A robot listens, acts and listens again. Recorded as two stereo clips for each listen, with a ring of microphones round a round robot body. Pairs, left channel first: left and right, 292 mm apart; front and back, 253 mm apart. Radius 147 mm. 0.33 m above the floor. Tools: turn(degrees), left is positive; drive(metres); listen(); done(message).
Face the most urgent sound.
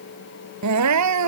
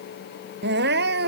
turn(degrees=-125)
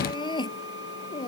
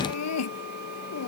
turn(degrees=15)
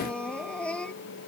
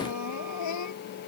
done("Found it: crying, straight ahead.")